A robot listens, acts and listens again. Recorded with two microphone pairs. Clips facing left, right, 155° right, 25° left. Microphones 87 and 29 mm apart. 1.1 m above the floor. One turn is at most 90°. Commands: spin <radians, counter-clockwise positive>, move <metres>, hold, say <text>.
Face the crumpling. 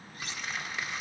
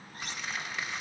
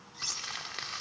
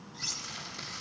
spin 1.57
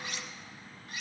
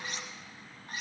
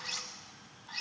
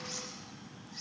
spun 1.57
spin 1.57
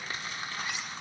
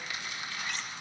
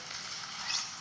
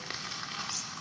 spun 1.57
spin 0.70
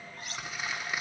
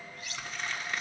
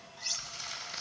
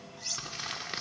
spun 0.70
say Facing the crumpling.